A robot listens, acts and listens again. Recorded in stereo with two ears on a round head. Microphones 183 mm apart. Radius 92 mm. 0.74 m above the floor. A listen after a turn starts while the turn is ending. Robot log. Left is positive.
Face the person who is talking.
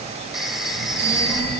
cmd yaw -30
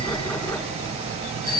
note: So it is at 140° right.
cmd yaw -140
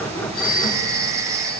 cmd idle
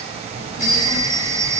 note: The child speaking is now 30° left.
cmd yaw +30
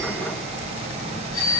note: The child speaking is now 20° left.
cmd yaw +20
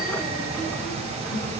note: The child speaking is now 10° left.
cmd yaw +10
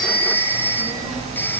end: Facing the child speaking, over 4 m away.